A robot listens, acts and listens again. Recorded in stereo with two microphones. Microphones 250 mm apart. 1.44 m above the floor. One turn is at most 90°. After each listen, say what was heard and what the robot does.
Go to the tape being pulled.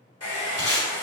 The tape being pulled: about 30° right or 150° right. Turn 30° right.
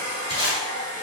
So it is at 115° right. Turn 90° right.
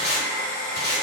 The tape being pulled is now 45° right. Turn 45° right.
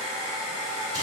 Keep listening.
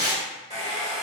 The tape being pulled is now 15° right. Turn 15° right.
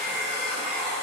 Keep listening.
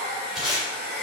Drive 1.0 m forward.
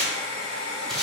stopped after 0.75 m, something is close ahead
Arrived at the tape being pulled, straight ahead.